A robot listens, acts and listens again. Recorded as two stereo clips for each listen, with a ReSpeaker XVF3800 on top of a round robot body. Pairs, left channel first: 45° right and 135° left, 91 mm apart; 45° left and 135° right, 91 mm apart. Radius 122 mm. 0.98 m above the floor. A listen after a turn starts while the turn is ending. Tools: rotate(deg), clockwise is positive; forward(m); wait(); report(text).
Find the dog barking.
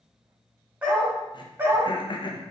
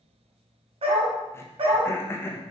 rotate(160)
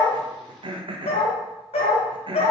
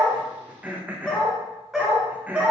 rotate(60)
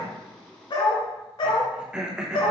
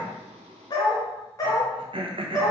rotate(10)
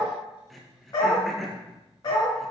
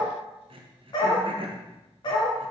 report("Found it: a dog barking, straight ahead, 1 to 2 m away.")